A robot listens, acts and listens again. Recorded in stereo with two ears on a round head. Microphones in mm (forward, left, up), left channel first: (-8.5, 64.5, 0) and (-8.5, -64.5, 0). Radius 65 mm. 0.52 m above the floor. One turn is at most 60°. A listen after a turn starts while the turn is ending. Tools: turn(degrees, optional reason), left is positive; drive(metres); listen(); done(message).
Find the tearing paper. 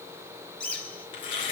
turn(degrees=45, reason="The tearing paper: about 45° left or 135° left.")
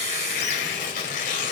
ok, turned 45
turn(degrees=60, reason="So it is at 85° left.")
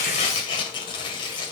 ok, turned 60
turn(degrees=40, reason="The tearing paper is now 40° left.")
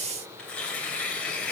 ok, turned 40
turn(degrees=10, reason="The tearing paper is now 10° left.")
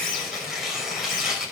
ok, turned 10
done("Facing the tearing paper, 2 to 4 m away.")